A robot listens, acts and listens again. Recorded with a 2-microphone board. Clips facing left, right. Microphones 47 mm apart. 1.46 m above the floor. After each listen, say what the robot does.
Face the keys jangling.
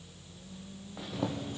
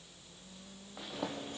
Turn 75° right.
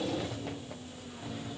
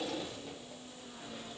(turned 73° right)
Turn 10° right.
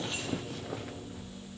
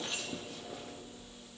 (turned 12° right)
Facing the keys jangling, over 4 m away.